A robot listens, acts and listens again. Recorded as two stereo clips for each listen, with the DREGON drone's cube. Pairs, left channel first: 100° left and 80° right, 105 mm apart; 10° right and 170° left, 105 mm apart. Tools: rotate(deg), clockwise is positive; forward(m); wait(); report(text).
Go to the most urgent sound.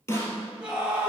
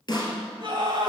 rotate(160)
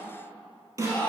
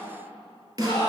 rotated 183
rotate(-25)
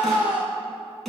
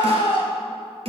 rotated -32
forward(1.0)
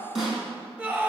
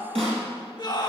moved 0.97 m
rotate(15)
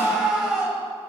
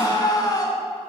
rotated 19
forward(1.0)
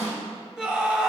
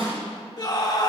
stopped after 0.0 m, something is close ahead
report("Arrived at the scream, straight ahead.")